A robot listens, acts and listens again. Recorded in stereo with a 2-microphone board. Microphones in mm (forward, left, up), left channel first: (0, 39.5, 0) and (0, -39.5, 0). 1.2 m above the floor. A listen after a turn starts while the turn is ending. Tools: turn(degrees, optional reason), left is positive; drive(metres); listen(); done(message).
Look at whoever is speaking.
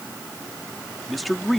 turn(degrees=30)
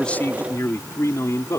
turn(degrees=135, reason="So it is at 135° left.")
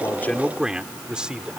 turn(degrees=-10, reason="The man speaking is now 10° right.")
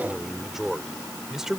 done("Facing the man speaking.")